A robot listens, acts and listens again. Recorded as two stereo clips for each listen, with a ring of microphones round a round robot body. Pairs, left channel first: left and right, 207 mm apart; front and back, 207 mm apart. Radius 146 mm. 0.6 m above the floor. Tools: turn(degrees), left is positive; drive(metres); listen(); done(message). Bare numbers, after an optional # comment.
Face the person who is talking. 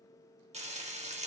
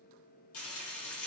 listen()
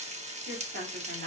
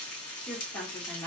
# The woman speaking: 75° right.
turn(-75)
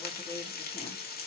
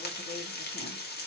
listen()
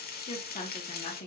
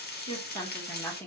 # The woman speaking is now 75° left.
turn(75)
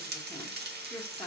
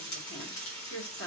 done("Facing the woman speaking, 1 to 2 m away.")